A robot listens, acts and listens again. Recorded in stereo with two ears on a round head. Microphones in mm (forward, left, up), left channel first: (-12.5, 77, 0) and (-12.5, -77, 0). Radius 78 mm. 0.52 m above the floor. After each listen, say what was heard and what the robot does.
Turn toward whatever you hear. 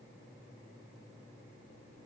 Keep listening.
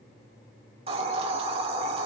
The hiss: about 30° right or 150° right. Turn 30° right.
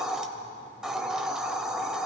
Found it: a hiss, straight ahead.